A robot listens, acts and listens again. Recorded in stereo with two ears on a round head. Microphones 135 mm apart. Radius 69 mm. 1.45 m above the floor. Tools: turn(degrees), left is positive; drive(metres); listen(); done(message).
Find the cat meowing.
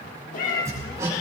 turn(degrees=60)
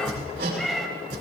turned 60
done("Found it: a cat meowing, straight ahead, 1 to 2 m away.")